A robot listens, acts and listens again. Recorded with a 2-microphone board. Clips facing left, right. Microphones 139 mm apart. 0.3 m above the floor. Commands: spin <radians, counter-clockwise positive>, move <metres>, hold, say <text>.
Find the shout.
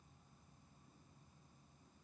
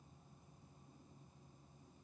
hold
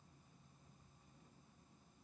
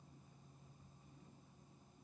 hold
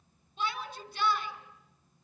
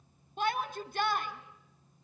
spin -0.87
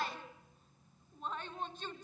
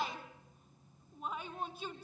spin -0.17
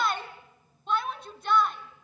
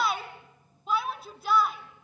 say Found it: a shout, straight ahead.